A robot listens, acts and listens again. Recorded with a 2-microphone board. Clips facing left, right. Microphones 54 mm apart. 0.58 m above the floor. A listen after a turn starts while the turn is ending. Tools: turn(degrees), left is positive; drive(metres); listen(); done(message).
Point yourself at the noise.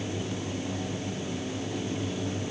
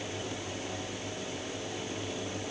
listen()
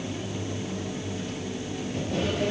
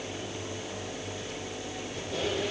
turn(degrees=55)
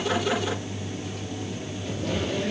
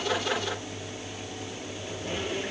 turn(degrees=70)
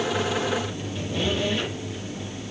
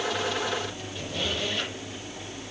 turn(degrees=10)
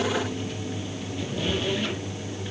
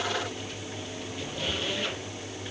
done("Found it: a squeak, straight ahead.")